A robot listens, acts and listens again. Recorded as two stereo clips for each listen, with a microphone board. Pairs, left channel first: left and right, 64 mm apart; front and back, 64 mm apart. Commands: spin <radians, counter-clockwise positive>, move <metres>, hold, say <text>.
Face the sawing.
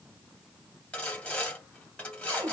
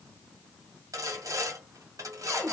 spin 2.79
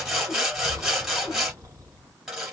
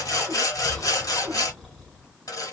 spin -0.17
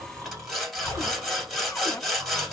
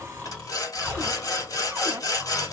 say Facing the sawing, 1 to 2 m away.